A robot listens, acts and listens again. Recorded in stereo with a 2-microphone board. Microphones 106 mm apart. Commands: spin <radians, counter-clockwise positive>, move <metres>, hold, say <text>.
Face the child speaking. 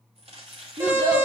spin -0.87
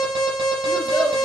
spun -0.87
spin -1.40
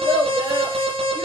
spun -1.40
spin -0.52
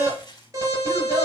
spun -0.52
say Facing the child speaking.